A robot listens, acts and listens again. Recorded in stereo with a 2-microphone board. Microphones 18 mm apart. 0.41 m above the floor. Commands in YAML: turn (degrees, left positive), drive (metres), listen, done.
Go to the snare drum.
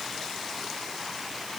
listen: true
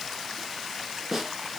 turn: -25
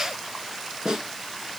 turn: -125
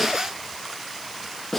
turn: 20
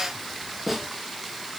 drive: 1.0
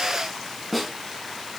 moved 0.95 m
drive: 1.0
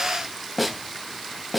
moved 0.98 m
drive: 1.0
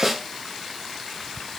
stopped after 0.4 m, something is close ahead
done: "Arrived at the snare drum, straight ahead."